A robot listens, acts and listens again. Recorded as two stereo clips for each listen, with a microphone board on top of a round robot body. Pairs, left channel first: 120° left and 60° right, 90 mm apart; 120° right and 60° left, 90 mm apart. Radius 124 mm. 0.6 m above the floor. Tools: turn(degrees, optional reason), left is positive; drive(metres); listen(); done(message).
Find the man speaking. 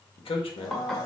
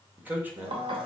turn(degrees=130, reason="The man speaking: 130° left.")
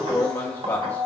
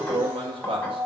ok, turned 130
turn(degrees=50, reason="The man speaking is now 50° left.")
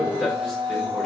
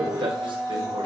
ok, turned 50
listen()
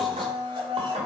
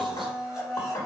listen()
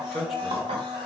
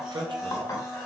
turn(degrees=30, reason="The man speaking is now 30° left.")
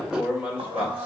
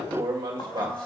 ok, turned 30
turn(degrees=15, reason="The man speaking is now 15° left.")
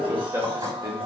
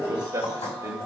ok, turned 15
done("Facing the man speaking, 2 to 4 m away.")